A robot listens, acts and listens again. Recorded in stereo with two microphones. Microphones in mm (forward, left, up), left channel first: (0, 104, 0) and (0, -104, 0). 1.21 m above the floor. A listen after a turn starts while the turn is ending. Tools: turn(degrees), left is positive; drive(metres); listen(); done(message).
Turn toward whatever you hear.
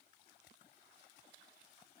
listen()
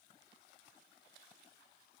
listen()
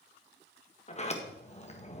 turn(degrees=35)
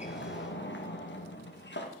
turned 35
turn(degrees=110)
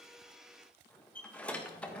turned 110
done("Found it: a sliding door, straight ahead, 1 to 2 m away.")